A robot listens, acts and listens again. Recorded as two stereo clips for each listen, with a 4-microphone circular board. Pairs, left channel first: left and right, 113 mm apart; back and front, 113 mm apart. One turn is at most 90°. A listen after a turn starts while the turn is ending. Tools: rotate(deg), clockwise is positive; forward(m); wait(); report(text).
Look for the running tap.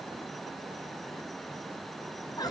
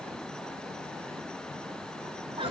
wait()
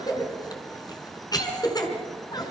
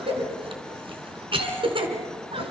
wait()
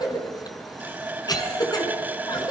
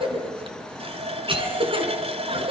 rotate(15)
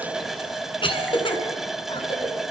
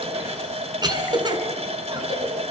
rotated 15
report("Facing the running tap.")